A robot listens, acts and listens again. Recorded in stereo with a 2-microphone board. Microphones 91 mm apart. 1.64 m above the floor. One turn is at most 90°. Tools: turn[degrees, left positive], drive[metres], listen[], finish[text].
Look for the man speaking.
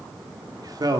Thought: The man speaking: about 45° right or 135° right.
Action: turn[-45]
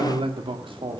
Thought: So it is at 70° right.
Action: turn[-70]
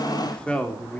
Thought: The man speaking is now 15° left.
Action: turn[15]
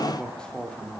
Thought: The man speaking is now 10° left.
Action: turn[10]
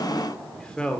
Thought: The man speaking is now 10° left.
Action: turn[10]
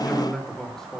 Action: finish[Found it: a man speaking, straight ahead.]